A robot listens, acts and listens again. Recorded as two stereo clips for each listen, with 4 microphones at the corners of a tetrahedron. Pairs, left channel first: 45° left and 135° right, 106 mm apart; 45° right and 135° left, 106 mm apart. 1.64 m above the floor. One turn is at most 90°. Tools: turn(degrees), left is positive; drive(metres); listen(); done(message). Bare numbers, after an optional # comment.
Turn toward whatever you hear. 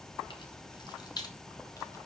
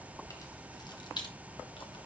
done("Found it: keys jangling, straight ahead, 1 to 2 m away.")